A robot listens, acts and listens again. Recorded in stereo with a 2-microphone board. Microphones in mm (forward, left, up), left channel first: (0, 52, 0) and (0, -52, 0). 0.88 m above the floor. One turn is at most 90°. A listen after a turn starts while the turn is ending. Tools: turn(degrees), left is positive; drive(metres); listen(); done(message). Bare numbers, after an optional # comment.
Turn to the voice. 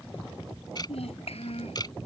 # The child speaking: about 75° left or 105° left.
turn(75)
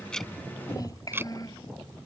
# So it is at 35° left.
turn(35)
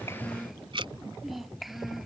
done("Facing the child speaking.")